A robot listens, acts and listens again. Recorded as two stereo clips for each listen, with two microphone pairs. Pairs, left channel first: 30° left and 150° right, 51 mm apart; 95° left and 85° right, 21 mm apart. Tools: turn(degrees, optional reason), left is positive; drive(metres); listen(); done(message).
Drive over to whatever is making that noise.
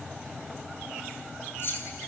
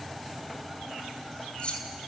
turn(degrees=65, reason="The keys jangling: 65° left.")
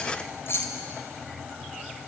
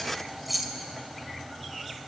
drive(metres=1.0)
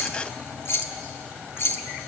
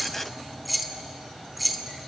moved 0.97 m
drive(metres=1.0)
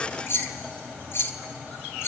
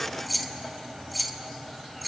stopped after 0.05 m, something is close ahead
done("Arrived at the keys jangling, straight ahead.")